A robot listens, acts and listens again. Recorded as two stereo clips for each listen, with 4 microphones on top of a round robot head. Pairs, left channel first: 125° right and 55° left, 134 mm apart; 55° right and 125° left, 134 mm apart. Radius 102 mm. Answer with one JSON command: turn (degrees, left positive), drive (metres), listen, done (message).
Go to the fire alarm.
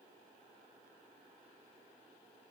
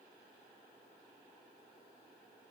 {"listen": true}
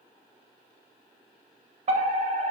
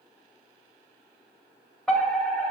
{"turn": 35}
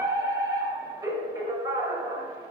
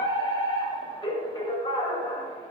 {"drive": 1.0}
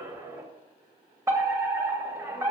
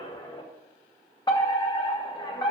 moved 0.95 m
{"drive": 1.0}
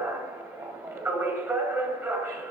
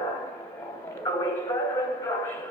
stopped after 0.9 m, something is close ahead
{"done": "I am next to the fire alarm."}